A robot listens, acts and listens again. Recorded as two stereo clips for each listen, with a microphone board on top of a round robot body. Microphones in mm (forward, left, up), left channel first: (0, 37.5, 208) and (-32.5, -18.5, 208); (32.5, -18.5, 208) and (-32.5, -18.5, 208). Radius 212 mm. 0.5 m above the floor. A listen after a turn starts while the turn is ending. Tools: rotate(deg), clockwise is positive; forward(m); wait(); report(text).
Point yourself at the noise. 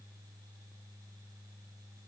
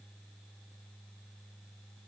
wait()
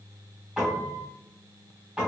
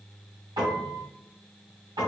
rotate(-160)
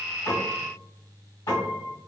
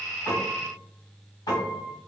rotate(-30)
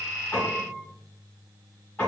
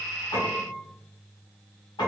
report("Facing the piano, 1 to 2 m away.")